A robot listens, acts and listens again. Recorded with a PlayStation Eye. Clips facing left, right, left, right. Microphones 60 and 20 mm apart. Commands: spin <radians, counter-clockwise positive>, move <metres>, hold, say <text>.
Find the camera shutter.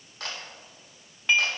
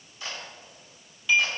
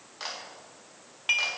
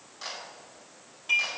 spin 1.22
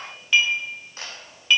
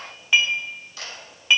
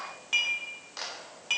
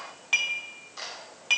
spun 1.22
spin 0.61
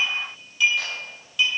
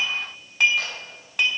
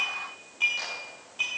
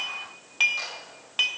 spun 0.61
hold
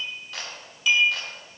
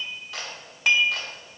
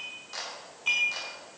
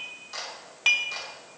say Facing the camera shutter, 2 to 4 m away.